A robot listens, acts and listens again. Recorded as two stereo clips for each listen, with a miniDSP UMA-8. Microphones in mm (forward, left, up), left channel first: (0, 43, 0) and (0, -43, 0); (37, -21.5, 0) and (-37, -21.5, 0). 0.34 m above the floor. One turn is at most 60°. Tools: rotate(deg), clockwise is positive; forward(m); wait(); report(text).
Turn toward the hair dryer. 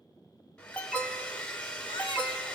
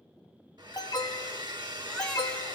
rotate(-60)
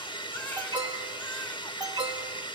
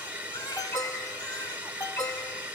rotate(-60)
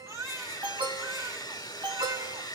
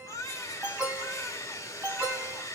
rotate(-50)
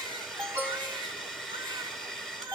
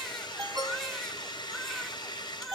report("Found it: a hair dryer, straight ahead.")